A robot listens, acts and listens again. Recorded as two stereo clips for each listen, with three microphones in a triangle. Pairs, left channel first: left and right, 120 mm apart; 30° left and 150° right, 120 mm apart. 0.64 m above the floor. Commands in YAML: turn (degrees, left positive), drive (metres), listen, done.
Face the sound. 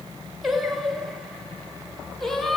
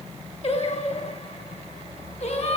done: "Found it: singing, straight ahead, 2 to 4 m away."